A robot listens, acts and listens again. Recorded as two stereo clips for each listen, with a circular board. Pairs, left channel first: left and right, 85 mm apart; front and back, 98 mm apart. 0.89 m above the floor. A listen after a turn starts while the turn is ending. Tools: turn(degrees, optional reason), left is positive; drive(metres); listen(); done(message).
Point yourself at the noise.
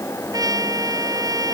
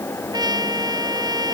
turn(degrees=-135, reason="The trumpet: 135° right.")
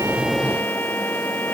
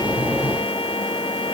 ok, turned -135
listen()
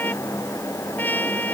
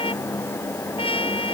turn(degrees=20, reason="The trumpet is now 20° left.")
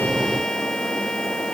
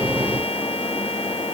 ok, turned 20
listen()
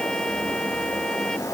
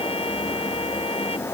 listen()
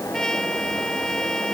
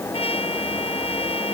done("Facing the trumpet.")